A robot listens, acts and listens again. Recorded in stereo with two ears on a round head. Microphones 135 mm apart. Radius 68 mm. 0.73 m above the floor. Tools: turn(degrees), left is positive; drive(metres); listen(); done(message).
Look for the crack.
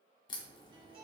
turn(degrees=30)
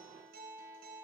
listen()
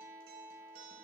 done("I heard a crack, but can't make it out now. It was about straight ahead or 120° left.")